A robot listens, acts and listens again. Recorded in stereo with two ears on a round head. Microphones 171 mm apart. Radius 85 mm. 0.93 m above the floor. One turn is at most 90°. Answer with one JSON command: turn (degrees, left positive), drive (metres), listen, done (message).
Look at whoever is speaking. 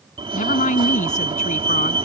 {"turn": 40}
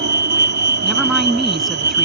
{"done": "Found it: a woman speaking, straight ahead."}